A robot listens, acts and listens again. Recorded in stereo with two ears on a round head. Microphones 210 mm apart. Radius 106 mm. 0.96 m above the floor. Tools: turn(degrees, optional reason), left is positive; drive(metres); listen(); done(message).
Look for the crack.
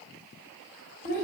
listen()
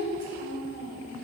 listen()
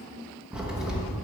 turn(degrees=-30)
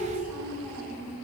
listen()
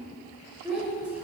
done("I heard a crack, but can't make it out now. It was about 25° left or 145° right.")